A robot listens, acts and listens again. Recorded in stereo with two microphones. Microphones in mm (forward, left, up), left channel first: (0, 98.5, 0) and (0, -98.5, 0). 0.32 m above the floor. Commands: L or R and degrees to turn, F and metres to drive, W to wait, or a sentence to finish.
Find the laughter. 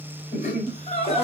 L35
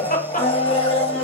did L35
L135
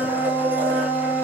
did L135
W
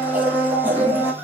W
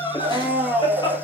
L25
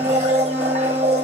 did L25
W
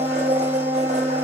W
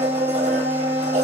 I heard laughter from this way, but can't make it out now.